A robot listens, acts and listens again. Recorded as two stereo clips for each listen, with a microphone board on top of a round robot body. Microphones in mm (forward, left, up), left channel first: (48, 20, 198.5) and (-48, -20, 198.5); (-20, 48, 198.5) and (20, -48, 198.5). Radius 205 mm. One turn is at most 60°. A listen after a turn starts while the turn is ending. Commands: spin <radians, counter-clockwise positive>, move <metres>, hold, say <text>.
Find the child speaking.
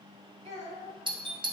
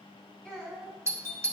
spin -1.05
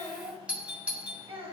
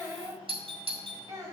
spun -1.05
spin -1.05
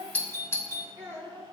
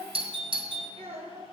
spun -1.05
spin -1.05
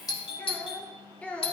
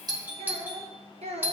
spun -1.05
spin -0.96
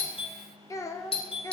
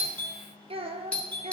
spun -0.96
spin -0.70
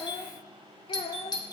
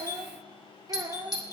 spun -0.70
spin -0.17
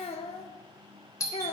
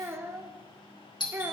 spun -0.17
say Facing the child speaking.